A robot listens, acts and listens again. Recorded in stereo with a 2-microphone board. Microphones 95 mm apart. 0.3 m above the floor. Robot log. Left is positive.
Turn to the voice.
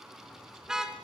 cmd idle
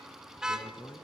note: The man speaking: about 30° left or 150° left.
cmd yaw +30
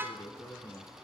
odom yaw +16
note: The man speaking: about 35° left or 145° left.
cmd yaw +35
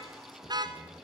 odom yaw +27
cmd idle
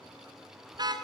cmd idle
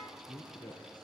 note: The man speaking: about 45° left or 135° left.
cmd yaw +45
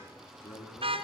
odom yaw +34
note: So it is at 105° left.
cmd yaw +105
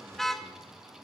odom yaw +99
cmd idle
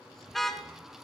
cmd idle
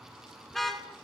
end: Facing where the man speaking came from. I can't hear it now.